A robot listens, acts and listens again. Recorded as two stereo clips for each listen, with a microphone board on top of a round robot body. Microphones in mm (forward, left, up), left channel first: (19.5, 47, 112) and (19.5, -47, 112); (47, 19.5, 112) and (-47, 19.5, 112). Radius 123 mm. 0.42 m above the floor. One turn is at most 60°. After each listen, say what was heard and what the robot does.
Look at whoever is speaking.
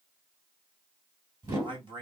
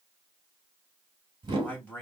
The man speaking: 70° right. Turn 60° right.
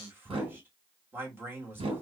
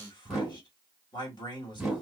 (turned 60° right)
The man speaking is now 25° right. Turn 25° right.
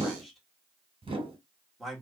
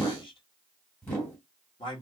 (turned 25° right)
Found it: a man speaking, straight ahead, 2 to 4 m away.